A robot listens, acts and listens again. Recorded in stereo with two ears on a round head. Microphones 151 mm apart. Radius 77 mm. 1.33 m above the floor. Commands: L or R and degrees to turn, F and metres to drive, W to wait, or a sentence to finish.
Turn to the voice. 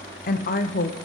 L50
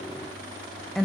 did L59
Facing the woman speaking, under 1 m away.